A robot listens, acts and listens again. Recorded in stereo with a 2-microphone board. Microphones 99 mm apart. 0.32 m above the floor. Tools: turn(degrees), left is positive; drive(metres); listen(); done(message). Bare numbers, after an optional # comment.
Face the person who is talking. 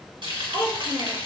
# The child speaking: about 45° right or 135° right.
turn(-45)
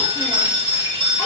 listen()
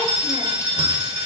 listen()
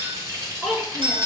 done("Found it: a child speaking, straight ahead, 2 to 4 m away.")